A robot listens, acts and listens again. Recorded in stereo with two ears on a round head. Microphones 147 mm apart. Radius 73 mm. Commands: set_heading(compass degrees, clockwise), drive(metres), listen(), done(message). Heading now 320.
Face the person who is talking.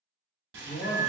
set_heading(280)
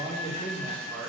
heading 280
set_heading(290)
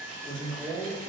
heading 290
set_heading(310)
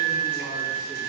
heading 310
listen()
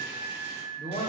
set_heading(350)
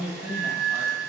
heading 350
set_heading(5)
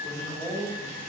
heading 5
done("Found it: a man speaking, straight ahead, 1 to 2 m away.")